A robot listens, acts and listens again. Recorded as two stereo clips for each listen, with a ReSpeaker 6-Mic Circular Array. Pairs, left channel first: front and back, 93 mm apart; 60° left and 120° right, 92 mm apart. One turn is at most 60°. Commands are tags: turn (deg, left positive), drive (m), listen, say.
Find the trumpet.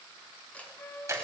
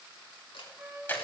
<turn deg="-50"/>
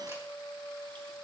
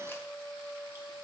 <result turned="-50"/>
<say>Facing the trumpet.</say>